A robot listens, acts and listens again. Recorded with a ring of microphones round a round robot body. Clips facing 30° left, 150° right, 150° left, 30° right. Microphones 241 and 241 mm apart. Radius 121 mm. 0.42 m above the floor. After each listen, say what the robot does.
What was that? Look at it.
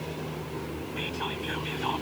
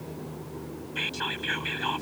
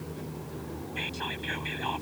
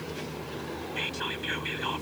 Turn 100° right.
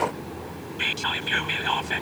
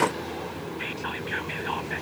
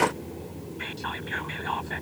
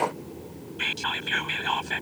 Facing the whispering.